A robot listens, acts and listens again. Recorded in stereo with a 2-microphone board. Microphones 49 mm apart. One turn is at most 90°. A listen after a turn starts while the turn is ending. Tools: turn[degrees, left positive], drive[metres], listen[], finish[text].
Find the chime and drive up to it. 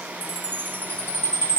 Thought: The chime: about 35° left or 145° left.
Action: turn[35]
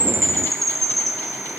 Action: drive[1.0]
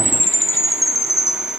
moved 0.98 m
Action: drive[1.0]
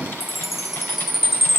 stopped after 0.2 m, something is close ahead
Action: finish[I am next to the chime.]